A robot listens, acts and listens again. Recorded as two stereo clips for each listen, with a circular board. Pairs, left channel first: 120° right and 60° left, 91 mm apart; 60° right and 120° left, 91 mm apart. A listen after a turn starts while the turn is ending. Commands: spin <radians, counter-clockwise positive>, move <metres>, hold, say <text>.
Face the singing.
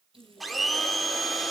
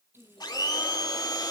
spin -1.57
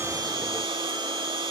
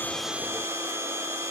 hold
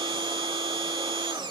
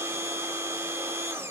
hold
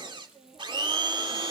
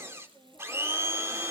spin 0.44
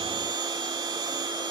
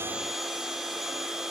hold
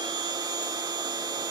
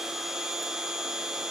hold
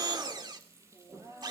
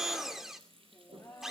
spin 0.17
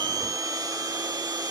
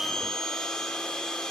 hold
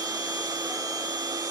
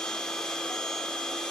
hold
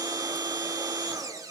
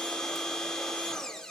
say Facing where the singing came from. I can't hear it now.